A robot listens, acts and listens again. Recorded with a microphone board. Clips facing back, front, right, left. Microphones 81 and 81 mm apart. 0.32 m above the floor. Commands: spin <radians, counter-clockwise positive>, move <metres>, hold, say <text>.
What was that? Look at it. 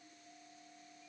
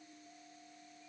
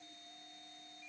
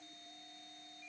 hold
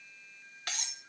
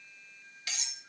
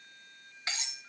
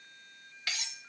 spin -2.62
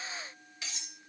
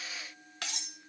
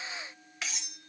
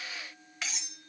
say Facing the cutlery clinking, under 1 m away.